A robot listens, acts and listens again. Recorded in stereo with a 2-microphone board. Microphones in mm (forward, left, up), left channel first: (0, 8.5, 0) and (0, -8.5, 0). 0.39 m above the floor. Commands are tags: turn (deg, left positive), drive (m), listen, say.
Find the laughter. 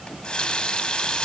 <listen/>
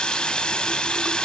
<listen/>
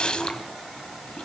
<say>I can't make out laughter to turn to.</say>